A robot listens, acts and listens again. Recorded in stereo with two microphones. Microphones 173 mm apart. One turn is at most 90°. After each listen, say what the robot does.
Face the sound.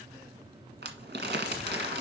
Turn 90° right.
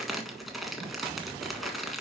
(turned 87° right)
Found it: crumpling, straight ahead, 1 to 2 m away.